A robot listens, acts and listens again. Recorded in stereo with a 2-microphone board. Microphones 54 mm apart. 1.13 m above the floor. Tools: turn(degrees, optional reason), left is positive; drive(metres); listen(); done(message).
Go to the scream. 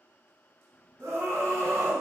turn(degrees=-70, reason="The scream: about 70° right or 110° right.")
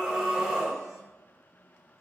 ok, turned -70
drive(metres=1.0)
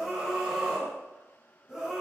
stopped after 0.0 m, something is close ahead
turn(degrees=-10, reason="The scream is now 10° right.")
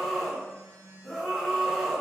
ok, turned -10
done("Blocked. The scream is further on, straight ahead.")